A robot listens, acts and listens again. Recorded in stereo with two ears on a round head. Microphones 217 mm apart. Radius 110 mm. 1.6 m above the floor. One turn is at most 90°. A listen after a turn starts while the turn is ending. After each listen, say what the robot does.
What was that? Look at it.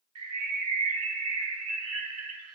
Turn 60° right.
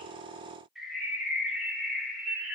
Found it: a bird, straight ahead, 1 to 2 m away.